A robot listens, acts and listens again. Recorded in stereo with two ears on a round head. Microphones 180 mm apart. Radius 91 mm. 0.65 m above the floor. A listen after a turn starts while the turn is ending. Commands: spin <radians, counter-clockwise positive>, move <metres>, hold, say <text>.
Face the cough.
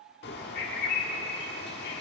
hold
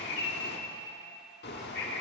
hold
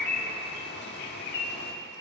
say I can't make out a cough, only a bird.